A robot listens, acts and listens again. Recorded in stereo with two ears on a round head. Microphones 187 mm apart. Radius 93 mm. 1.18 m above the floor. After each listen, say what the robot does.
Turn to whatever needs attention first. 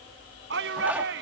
Turn 60° right.
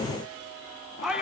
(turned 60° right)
Facing the shout.